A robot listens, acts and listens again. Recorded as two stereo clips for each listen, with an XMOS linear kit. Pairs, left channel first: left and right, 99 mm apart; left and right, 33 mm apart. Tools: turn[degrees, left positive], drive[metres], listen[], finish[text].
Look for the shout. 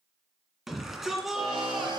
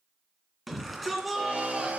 Action: turn[-30]
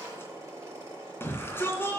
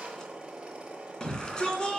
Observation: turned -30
Thought: So it is at 25° left.
Action: turn[25]
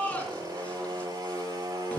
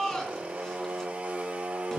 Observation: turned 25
Thought: The shout is now 15° left.
Action: turn[15]
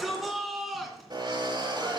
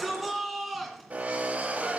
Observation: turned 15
Action: finish[Facing the shout, 2 to 4 m away.]